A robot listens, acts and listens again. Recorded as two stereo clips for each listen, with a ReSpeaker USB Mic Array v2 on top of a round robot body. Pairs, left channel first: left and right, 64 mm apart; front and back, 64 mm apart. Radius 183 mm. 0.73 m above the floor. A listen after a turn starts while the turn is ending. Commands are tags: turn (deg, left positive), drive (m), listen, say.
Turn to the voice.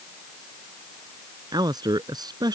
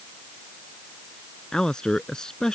<turn deg="-80"/>
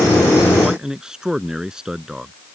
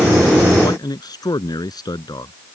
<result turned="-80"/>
<turn deg="-10"/>
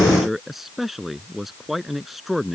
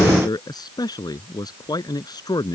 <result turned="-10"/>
<say>Facing the man speaking.</say>